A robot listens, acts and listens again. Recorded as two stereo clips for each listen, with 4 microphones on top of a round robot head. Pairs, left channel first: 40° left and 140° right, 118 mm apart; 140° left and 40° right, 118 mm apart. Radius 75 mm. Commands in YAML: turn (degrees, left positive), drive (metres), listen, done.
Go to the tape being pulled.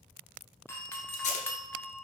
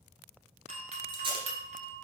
turn: 10
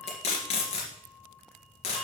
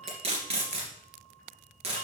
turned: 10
drive: 1.0
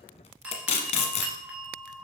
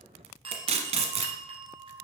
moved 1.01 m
drive: 1.0
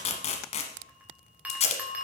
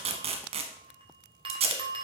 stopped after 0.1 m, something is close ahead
done: "I am next to the tape being pulled."